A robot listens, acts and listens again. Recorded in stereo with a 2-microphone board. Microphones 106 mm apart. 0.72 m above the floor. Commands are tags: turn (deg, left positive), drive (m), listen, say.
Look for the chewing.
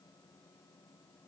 <listen/>
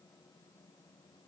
<listen/>
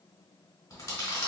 <turn deg="30"/>
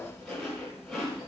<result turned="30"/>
<say>Facing the chewing, 1 to 2 m away.</say>